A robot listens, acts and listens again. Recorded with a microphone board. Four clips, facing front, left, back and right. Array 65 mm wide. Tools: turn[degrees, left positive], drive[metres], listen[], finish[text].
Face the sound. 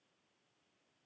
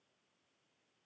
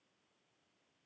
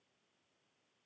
Action: listen[]
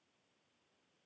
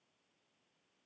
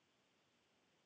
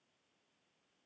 Action: listen[]
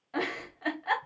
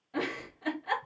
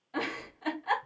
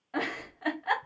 Thought: The giggle: 60° right.
Action: turn[-60]
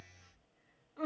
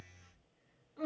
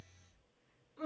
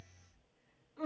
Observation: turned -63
Action: finish[Found it: a giggle, straight ahead, 2 to 4 m away.]